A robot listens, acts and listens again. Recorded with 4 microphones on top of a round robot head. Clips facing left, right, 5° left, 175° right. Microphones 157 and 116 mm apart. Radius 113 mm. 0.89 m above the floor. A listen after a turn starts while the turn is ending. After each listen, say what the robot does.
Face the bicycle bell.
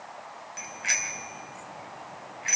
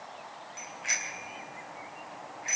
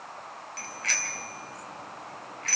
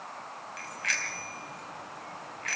Turn 60° left.
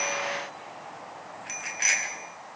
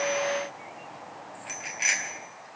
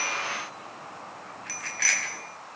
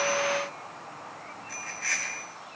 Found it: a bicycle bell, straight ahead, over 4 m away.